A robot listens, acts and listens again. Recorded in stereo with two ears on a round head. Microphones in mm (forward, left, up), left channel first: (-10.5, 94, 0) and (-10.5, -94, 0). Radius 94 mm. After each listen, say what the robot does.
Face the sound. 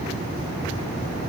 Keep listening.
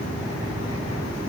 Keep listening.
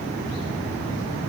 I can't make out anything.